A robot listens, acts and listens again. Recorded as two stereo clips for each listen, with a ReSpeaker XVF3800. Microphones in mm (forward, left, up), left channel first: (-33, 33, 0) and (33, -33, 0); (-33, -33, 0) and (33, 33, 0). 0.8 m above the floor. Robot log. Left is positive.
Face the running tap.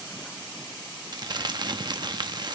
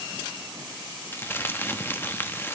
cmd idle
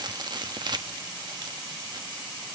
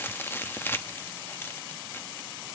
cmd idle
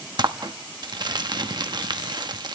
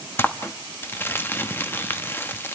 end: I can't make out a running tap, only crumpling.